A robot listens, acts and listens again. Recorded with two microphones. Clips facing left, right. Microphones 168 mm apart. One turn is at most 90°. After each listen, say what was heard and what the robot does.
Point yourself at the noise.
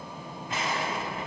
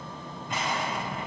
Turn 30° left.
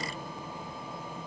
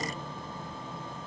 Keep listening.
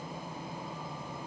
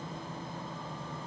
I heard an explosion, but can't make it out now. It was about 25° right or 145° left.